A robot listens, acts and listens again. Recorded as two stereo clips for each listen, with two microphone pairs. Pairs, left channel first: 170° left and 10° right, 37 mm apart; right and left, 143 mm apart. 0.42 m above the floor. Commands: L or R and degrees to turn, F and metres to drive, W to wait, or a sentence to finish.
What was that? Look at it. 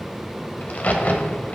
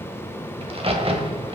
L130
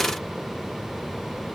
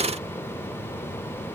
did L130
I heard a crack from this way, but can't make it out now.